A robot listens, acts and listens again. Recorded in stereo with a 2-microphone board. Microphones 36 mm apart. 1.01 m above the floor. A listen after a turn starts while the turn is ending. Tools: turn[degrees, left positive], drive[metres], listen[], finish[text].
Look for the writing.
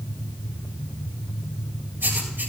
Action: turn[-90]
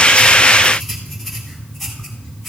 Action: finish[Facing the writing, 2 to 4 m away.]